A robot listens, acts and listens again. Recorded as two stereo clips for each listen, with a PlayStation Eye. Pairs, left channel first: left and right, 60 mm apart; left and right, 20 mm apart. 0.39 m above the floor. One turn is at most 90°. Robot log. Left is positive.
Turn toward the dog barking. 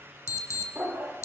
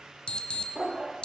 note: The dog barking: about 30° right or 150° right.
cmd yaw -30
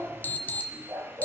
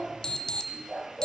note: So it is at 120° right.
cmd yaw -90
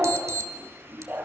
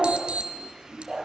note: The dog barking is now 30° right.
cmd yaw -30
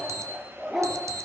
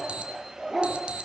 end: Found it: a dog barking, straight ahead.